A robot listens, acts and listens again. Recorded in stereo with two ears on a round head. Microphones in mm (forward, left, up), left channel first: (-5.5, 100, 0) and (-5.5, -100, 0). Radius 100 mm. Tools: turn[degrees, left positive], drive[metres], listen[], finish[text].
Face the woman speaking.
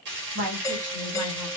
Thought: The woman speaking: about 70° right or 110° right.
Action: turn[-70]
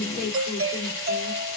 Thought: So it is at 15° right.
Action: turn[-15]
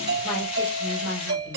Thought: The woman speaking is now 10° left.
Action: turn[10]
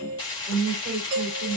Thought: The woman speaking is now 10° left.
Action: turn[10]
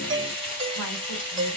Action: listen[]
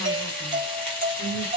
Action: finish[Found it: a woman speaking, straight ahead, 2 to 4 m away.]